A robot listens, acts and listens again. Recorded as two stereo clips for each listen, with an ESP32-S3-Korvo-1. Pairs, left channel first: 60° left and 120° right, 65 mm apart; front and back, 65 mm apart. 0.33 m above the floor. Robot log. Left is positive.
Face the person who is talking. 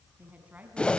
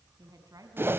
note: The woman speaking: straight behind.
cmd yaw +180
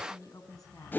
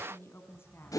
note: The woman speaking is now 50° left.
cmd yaw +50
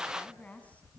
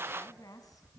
end: Found it: a woman speaking, straight ahead.